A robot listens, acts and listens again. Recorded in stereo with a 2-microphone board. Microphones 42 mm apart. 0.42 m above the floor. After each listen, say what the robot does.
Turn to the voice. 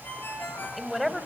Turn 30° left.
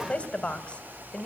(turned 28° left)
Turn 145° left.
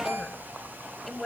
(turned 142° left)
Facing the woman speaking.